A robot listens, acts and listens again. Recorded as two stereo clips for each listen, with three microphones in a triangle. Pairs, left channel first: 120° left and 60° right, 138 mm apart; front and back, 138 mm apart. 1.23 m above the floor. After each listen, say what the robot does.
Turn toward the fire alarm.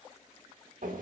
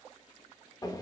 Keep listening.
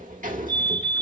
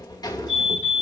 Turn 45° left.
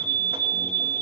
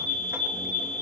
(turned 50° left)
Facing the fire alarm.